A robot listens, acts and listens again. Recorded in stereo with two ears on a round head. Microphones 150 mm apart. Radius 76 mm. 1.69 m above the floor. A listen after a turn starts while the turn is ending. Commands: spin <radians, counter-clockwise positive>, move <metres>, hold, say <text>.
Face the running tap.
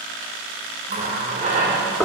spin -0.70
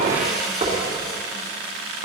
say Facing the running tap.